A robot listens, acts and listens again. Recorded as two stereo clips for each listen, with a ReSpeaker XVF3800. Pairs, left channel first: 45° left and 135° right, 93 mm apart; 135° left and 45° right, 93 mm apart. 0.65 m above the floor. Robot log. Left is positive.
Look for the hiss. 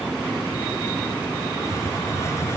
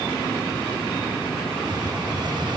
note: The hiss: 10° right.
cmd yaw -10
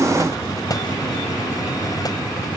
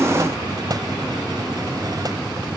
end: Found it: a hiss, straight ahead.